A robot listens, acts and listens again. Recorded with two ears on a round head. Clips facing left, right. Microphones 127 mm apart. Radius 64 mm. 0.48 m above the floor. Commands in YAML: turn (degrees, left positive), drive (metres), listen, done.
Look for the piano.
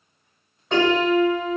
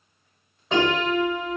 turn: 30
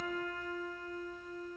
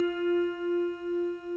turn: 155
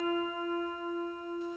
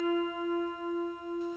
done: "Facing the piano."